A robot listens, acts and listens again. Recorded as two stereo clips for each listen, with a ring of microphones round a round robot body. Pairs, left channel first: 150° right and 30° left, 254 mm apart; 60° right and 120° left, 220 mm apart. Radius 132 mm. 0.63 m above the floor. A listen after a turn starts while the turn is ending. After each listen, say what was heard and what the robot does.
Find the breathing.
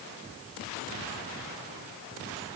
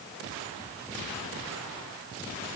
Keep listening.
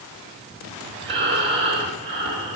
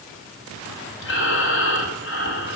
The breathing: 40° right. Turn 40° right.
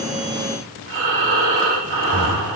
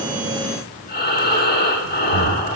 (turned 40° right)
The breathing is now 10° right. Turn 10° right.
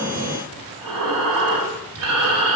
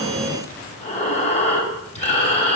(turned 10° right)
Facing the breathing.